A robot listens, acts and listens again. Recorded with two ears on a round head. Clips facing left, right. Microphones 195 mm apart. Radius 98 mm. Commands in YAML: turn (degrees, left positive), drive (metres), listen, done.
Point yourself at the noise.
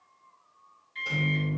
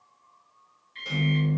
turn: -30
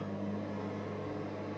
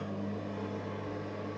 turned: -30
turn: -145
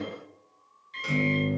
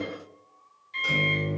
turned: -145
turn: 15
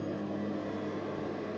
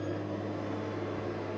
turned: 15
done: "Facing the microwave."